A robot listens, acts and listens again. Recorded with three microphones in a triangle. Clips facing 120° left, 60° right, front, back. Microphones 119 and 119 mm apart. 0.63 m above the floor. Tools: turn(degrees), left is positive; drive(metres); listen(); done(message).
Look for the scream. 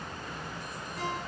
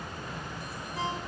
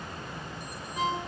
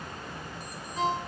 listen()
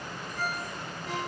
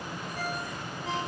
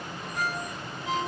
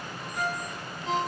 listen()
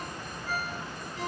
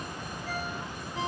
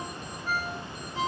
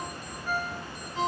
done("I can't make out a scream to turn to.")